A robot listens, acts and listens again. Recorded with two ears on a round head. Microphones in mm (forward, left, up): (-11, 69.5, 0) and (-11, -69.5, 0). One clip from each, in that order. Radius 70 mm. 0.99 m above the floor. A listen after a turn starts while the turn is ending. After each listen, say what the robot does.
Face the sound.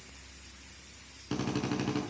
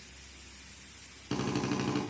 Turn 30° right.
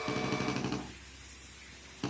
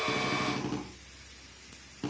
Turn 30° left.
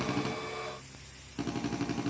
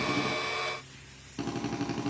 Found it: a drill, straight ahead, over 4 m away.